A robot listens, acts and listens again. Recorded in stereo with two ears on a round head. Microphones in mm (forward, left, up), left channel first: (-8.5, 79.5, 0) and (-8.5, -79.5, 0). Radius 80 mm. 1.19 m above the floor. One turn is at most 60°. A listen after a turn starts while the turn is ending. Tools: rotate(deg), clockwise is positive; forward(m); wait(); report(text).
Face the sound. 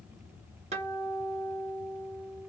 rotate(40)
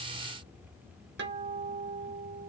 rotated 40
rotate(60)
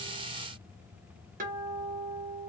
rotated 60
rotate(55)
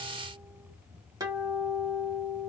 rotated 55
rotate(20)
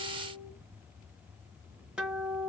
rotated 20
report("Facing the guitar, under 1 m away.")